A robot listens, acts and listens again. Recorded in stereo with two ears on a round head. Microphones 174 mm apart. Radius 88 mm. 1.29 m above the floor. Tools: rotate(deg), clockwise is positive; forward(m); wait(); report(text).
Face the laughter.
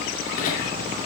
rotate(-40)
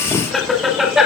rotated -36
report("Facing the laughter.")